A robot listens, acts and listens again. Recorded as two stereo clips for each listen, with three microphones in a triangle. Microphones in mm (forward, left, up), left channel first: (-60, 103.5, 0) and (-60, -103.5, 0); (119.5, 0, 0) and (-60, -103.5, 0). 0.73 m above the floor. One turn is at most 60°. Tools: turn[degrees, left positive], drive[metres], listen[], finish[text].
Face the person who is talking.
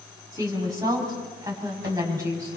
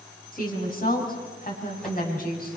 Thought: The woman speaking: 15° right.
Action: turn[-15]
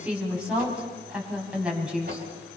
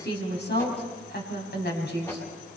Action: finish[Found it: a woman speaking, straight ahead, over 4 m away.]